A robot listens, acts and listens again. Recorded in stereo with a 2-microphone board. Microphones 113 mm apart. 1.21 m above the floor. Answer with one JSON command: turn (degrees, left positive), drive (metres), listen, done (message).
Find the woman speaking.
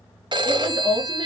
{"turn": -40}
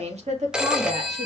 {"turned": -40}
{"turn": -100}
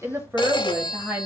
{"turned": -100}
{"turn": -15}
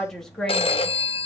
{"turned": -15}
{"done": "Facing the woman speaking."}